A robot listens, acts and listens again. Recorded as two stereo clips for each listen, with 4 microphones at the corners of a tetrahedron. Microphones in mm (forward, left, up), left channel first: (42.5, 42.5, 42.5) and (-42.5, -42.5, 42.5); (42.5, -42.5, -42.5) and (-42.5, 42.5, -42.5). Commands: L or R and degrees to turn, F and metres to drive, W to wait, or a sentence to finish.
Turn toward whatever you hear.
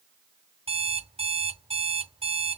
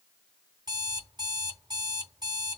R170
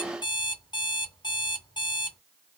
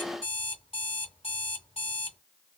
Found it: an alarm clock, straight ahead.